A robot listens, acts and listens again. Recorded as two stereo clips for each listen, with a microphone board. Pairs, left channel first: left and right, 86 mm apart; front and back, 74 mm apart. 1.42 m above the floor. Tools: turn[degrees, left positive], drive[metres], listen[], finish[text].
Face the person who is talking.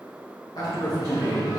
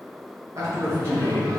Thought: The man speaking: 135° left.
Action: turn[135]
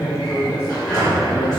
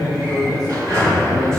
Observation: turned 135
Thought: The man speaking is now 30° left.
Action: turn[30]
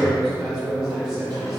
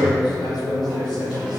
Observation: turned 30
Action: finish[Found it: a man speaking, straight ahead.]